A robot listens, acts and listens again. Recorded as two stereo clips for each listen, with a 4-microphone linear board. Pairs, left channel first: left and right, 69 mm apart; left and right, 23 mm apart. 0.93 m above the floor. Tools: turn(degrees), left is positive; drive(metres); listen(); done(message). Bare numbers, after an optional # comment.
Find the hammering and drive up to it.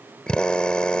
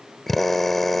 listen()
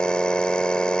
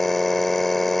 listen()
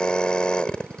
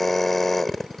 done("I can't make out hammering, only a drill.")